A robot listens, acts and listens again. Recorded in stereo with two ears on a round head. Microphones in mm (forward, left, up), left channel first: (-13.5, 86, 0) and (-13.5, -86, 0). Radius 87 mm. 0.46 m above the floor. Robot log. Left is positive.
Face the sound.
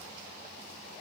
cmd idle
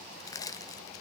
note: The crushing: about 20° left or 160° left.
cmd yaw +20
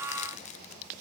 cmd idle
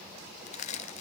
note: So it is at 140° left.
cmd yaw +140
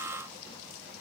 cmd idle
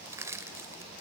note: The crushing is now 15° right.
cmd yaw -15
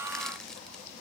cmd idle
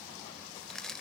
end: Found it: crushing, straight ahead, 1 to 2 m away.